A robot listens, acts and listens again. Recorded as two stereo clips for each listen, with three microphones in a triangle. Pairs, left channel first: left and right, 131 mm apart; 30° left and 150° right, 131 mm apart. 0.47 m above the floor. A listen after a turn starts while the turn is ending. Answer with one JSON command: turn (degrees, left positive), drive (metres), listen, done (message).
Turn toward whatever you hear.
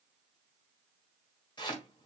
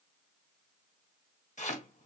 {"turn": 40}
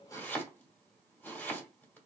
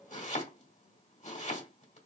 {"turn": 15}
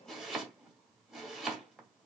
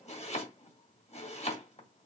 {"done": "Facing the chopping, 2 to 4 m away."}